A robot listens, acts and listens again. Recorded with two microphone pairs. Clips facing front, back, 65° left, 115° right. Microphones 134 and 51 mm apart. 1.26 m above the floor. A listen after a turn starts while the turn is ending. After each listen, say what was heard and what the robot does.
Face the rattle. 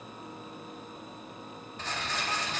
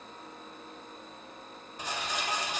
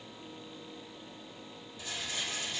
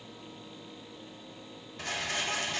The rattle: 100° right. Turn 100° right.
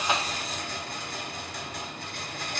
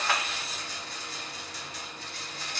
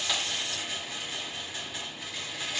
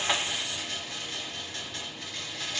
The rattle is now 20° right. Turn 20° right.
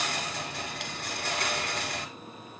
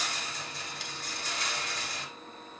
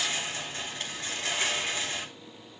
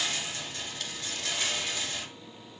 Found it: a rattle, straight ahead.